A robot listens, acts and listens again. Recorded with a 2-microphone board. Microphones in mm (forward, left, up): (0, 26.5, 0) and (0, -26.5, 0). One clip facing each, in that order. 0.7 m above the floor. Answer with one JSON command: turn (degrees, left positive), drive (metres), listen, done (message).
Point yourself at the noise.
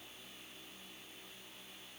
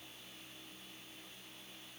{"listen": true}
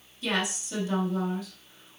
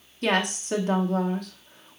{"turn": -55}
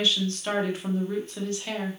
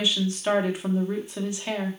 {"turn": -20}
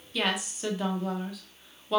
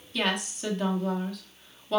{"done": "Facing the woman speaking, 1 to 2 m away."}